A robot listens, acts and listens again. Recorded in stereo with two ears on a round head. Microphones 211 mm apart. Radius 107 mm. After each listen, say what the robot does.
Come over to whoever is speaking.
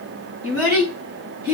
Turn 15° right.
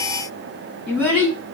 Drive 1.0 m forward.
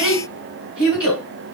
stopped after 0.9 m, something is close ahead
Arrived at the child speaking, straight ahead.